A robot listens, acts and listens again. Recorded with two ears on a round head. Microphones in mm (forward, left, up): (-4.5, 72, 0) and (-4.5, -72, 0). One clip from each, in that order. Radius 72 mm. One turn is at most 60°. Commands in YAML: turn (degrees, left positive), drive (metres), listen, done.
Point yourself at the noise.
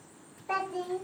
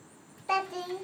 turn: -60
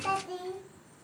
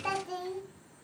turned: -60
turn: -15
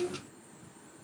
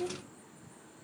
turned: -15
done: "Facing the child speaking."